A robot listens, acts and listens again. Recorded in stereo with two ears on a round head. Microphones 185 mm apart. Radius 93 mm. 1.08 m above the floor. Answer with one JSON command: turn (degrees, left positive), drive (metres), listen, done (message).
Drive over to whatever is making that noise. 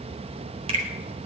{"turn": -30}
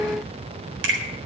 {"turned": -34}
{"turn": -115}
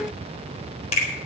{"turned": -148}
{"turn": 30}
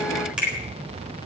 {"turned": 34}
{"drive": 1.0}
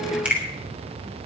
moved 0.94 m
{"drive": 1.0}
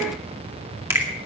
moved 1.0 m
{"turn": -10}
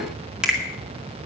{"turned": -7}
{"drive": 1.0}
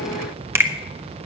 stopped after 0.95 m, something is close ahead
{"turn": -10}
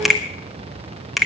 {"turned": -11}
{"done": "Arrived at the finger snap, straight ahead."}